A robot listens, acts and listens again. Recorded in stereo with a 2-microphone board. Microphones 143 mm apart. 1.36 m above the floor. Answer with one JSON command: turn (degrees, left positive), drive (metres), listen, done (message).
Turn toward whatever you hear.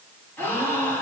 {"turn": 30}
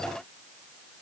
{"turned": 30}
{"listen": true}
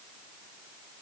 {"done": "I heard a gasp, but can't make it out now. It was about 20° right or 140° left."}